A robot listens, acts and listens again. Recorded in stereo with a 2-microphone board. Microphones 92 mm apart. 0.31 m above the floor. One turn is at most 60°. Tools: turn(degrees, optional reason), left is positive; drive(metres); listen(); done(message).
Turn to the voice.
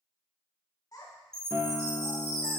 turn(degrees=45, reason="The child speaking: about 45° left or 135° left.")
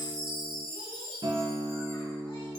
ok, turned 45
listen()
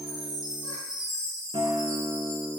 listen()
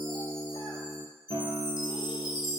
done("I heard a child speaking, but can't make it out now. It was about straight ahead or 90° left.")